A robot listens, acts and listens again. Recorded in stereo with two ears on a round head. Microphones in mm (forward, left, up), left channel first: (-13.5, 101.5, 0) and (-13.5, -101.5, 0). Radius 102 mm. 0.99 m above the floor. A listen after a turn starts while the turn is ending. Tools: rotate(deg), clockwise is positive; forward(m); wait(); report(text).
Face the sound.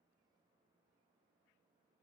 wait()
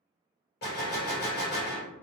rotate(-45)
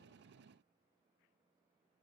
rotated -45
wait()
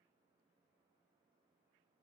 report("I heard a gunshot, but can't make it out now. It was about straight ahead or 90° left.")